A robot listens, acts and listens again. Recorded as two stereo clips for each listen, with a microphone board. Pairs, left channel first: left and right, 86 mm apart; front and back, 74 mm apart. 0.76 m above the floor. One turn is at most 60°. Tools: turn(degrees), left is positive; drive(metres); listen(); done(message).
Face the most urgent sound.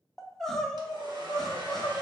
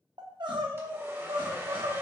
turn(degrees=60)
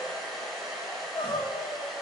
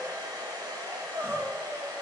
turn(degrees=60)
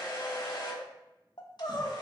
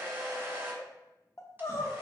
turn(degrees=55)
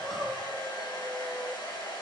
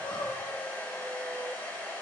done("Found it: crying, straight ahead.")